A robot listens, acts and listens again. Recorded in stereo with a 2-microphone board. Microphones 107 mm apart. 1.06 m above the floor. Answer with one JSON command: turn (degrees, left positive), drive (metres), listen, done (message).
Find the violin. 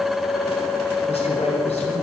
{"listen": true}
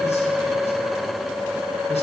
{"listen": true}
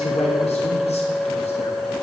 {"done": "I can't make out a violin, only a man speaking."}